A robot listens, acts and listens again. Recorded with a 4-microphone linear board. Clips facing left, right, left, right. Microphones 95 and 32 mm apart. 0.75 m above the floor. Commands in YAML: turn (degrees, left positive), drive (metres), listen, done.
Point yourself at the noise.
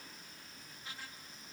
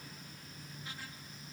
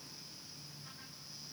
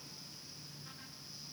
listen: true
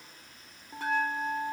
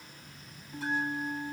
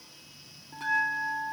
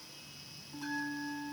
turn: 65
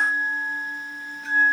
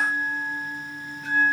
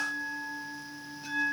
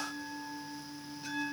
done: "Facing the bell, 1 to 2 m away."